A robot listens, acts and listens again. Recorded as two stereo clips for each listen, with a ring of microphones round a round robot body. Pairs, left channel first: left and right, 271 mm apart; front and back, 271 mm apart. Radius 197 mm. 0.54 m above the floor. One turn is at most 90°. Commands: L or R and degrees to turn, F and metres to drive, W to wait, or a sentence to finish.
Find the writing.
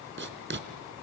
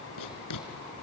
R40
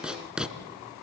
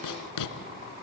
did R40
Found it: writing, straight ahead, 1 to 2 m away.